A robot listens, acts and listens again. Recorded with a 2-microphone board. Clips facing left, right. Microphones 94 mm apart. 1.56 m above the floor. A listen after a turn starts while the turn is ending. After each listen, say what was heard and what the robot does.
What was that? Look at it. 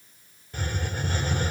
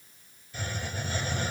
The hiss: about 60° left or 120° left. Turn 60° left.
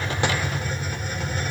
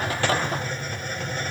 Facing the hiss, 2 to 4 m away.